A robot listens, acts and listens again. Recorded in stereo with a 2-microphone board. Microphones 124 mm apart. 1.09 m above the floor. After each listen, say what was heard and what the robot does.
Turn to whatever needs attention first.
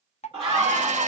The scream: about 45° right or 135° right. Turn 45° right.
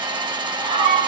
So it is at 90° right. Turn 90° right.
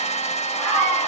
The scream is now 10° left. Turn 10° left.
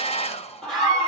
Facing the scream, 1 to 2 m away.